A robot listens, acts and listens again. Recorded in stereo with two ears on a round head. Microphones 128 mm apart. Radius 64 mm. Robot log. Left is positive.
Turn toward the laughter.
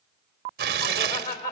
note: The laughter: about 60° left or 120° left.
cmd yaw +60
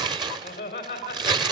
note: So it is at 40° left.
cmd yaw +40
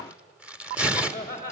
note: The laughter is now 20° left.
cmd yaw +20
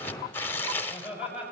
end: Facing the laughter.